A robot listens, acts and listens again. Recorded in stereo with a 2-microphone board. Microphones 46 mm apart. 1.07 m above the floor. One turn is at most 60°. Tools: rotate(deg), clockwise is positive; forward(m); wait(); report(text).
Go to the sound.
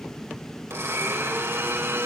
rotate(60)
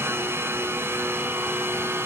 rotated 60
rotate(55)
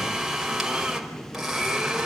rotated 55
forward(1.0)
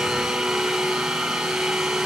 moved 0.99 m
forward(1.0)
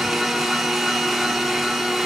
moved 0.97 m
forward(1.0)
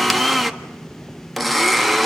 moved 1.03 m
forward(1.0)
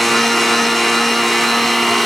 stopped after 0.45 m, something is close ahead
report("Arrived at the blender, straight ahead.")